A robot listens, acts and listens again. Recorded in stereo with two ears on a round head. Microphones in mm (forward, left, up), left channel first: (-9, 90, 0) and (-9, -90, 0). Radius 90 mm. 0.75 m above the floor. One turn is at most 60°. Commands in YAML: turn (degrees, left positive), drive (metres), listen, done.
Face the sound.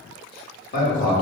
turn: 40
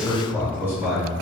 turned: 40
turn: -10
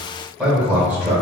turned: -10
turn: -10
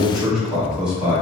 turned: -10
done: "Facing the man speaking."